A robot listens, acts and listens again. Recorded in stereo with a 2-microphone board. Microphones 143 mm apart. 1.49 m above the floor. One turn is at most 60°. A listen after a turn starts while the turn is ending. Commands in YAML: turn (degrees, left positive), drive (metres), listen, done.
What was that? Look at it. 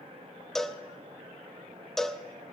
turn: 30
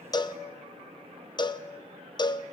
turn: 60
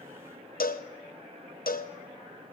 turn: 60
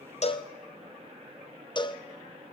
turn: 30
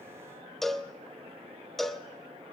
done: "Found it: a cowbell, straight ahead, 1 to 2 m away."